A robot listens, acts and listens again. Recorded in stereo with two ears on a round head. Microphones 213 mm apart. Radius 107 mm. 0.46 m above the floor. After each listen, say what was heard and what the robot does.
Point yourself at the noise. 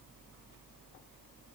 Keep listening.
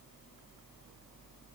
Keep listening.
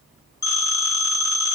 The phone ringing: about 15° left or 165° left. Turn 15° left.
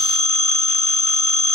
So it is at 150° left. Turn 150° left.
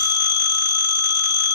The phone ringing is now 45° left. Turn 45° left.
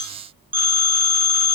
The phone ringing is now 10° right. Turn 10° right.
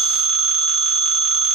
Facing the phone ringing, under 1 m away.